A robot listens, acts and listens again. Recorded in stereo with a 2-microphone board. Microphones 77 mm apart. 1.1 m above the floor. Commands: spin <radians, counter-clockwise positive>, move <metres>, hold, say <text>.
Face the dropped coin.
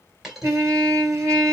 spin -0.52
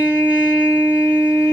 hold
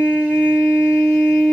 say I heard a dropped coin, but can't make it out now. It was about 25° left or 145° right.